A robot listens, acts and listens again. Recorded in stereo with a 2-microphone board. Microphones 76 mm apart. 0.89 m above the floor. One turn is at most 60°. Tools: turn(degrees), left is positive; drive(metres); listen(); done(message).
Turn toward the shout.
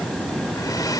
listen()
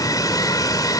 listen()
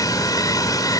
done("I can't make out a shout to turn to.")